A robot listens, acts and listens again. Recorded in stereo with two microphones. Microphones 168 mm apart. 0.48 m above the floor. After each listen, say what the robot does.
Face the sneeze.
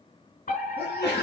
Turn 75° left.
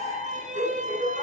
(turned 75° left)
Keep listening.
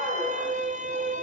I heard a sneeze, but can't make it out now. It was about straight ahead or 30° left.